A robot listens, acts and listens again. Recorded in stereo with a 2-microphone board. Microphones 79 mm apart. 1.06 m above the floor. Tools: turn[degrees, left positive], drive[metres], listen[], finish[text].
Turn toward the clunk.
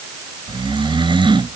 Action: listen[]
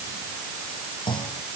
Action: turn[90]
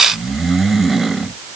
Action: finish[Facing where the clunk came from. I can't hear it now.]